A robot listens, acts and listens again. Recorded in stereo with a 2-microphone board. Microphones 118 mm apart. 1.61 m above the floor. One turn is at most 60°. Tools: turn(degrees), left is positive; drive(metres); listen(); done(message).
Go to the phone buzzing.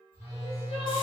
turn(degrees=-25)
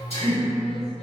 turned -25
turn(degrees=-60)
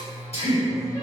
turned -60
turn(degrees=-60)
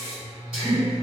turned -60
drive(metres=1.0)
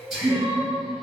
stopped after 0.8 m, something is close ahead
listen()
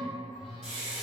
done("I am next to the phone buzzing.")